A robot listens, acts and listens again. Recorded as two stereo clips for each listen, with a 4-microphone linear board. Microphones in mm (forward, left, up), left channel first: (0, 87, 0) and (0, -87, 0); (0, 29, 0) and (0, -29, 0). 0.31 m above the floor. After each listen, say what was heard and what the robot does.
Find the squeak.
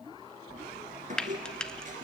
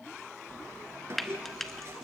The squeak: about 45° right or 135° right. Turn 45° right.
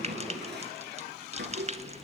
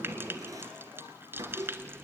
So it is at 90° right. Turn 90° right.
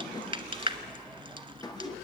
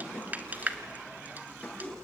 The squeak is now 20° left. Turn 20° left.
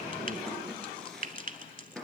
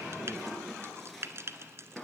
Facing the squeak, 2 to 4 m away.